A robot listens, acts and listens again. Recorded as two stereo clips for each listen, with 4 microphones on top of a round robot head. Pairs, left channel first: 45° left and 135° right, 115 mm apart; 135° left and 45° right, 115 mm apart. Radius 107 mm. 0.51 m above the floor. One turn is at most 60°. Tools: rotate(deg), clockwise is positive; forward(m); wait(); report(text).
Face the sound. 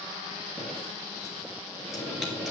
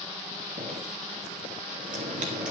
rotate(45)
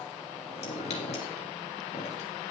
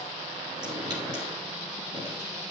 rotate(-10)
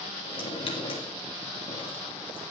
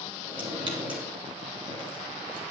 report("Found it: dripping, straight ahead, 2 to 4 m away.")